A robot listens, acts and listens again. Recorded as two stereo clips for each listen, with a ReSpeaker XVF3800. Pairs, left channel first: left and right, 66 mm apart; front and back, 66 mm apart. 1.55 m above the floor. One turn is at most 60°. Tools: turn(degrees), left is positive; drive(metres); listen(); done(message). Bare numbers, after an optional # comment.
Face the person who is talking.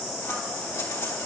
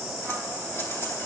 listen()
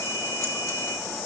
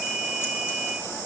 listen()
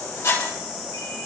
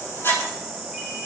done("I can't make out anyone speaking, only scissors.")